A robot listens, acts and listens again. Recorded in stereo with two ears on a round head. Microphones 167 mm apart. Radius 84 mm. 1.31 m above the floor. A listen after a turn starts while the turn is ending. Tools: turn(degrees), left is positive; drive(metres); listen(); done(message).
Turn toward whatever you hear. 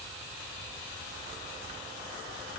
listen()
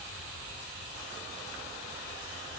listen()
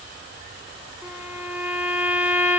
turn(degrees=-30)
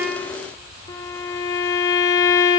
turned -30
turn(degrees=20)
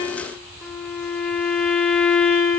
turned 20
done("Found it: a violin, straight ahead.")